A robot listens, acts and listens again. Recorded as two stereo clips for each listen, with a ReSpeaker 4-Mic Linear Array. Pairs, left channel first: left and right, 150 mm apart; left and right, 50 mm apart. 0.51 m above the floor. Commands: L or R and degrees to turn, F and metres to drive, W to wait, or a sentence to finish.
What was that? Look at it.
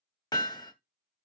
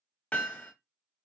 L30
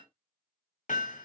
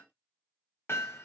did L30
L120
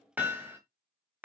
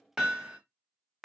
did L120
R10
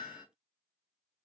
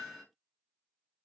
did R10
Found it: hammering, straight ahead, 1 to 2 m away.